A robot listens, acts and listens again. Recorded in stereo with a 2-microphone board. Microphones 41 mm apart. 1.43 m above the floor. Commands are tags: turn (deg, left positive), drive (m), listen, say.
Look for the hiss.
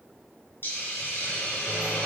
<turn deg="60"/>
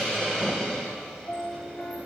<say>Facing the hiss.</say>